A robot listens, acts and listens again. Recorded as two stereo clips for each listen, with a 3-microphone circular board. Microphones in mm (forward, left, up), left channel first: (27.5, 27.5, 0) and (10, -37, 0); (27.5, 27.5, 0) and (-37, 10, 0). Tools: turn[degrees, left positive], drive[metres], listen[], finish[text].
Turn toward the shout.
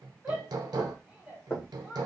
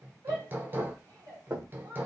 Thought: The shout: 175° right.
Action: turn[-175]
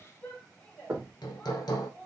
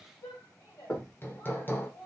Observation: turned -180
Action: finish[Found it: a shout, straight ahead, 1 to 2 m away.]